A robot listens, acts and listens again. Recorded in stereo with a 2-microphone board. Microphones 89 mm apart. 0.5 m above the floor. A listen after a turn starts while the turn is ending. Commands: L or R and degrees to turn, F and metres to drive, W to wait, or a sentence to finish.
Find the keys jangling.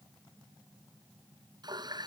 W
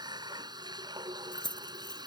L50
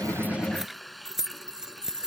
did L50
Found it: keys jangling, straight ahead.